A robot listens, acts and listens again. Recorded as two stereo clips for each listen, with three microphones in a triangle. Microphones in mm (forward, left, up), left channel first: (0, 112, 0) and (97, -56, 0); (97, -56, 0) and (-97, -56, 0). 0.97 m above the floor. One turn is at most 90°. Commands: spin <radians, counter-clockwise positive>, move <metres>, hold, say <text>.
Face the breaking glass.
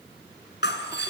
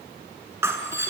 spin 1.57
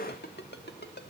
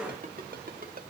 spin 0.26
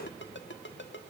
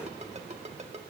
say I heard breaking glass from this way, but can't make it out now.